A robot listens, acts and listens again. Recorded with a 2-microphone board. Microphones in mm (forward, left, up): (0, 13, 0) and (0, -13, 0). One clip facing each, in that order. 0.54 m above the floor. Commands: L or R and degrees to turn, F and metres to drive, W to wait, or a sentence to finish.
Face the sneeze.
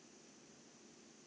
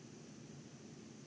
W
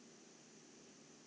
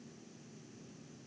W
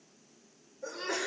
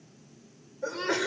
R50
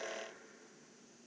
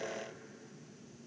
W
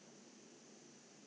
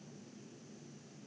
I heard a sneeze, but can't make it out now. It was about straight ahead or 80° right.